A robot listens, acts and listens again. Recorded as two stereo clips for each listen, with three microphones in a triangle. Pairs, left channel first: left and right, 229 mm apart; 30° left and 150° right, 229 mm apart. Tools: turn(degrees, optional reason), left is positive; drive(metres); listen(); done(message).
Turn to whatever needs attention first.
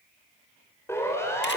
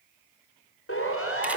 turn(degrees=10, reason="The siren: 10° left.")
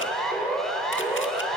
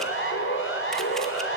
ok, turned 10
done("Facing the siren.")